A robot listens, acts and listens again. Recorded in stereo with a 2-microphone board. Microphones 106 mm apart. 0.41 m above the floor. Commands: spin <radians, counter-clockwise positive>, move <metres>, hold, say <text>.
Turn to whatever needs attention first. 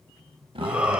spin -0.52
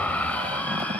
spin 0.26
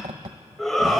say Facing the shout.